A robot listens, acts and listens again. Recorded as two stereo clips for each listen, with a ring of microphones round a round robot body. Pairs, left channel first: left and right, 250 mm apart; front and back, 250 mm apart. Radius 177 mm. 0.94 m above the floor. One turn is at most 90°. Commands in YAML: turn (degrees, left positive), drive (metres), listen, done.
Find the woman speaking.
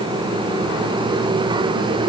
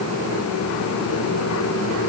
listen: true
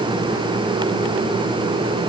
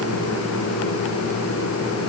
listen: true
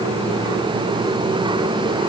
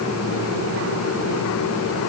done: "I can't make out a woman speaking to turn to."